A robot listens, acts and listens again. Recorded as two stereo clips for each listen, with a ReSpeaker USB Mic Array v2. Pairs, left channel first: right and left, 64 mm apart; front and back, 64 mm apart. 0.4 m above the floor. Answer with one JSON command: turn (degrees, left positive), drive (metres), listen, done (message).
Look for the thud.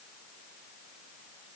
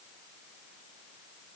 {"listen": true}
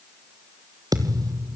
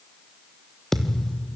{"turn": 85}
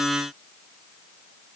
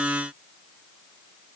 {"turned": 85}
{"done": "Facing where the thud came from. I can't hear it now."}